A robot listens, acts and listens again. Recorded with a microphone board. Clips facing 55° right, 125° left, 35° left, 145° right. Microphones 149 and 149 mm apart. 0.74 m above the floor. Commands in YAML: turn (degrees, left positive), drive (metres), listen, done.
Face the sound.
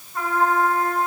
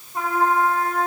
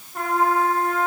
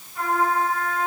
turn: 55
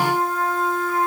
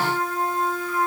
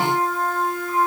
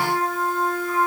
done: "Facing the trumpet."